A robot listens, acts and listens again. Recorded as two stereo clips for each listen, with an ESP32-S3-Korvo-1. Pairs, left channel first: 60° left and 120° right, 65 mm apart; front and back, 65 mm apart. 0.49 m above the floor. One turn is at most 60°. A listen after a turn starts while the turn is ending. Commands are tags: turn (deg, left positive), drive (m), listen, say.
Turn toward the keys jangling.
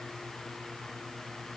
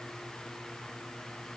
<listen/>
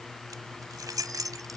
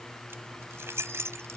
<turn deg="-60"/>
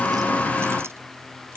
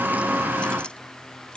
<turn deg="-60"/>
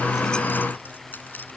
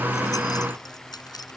<say>Found it: keys jangling, straight ahead.</say>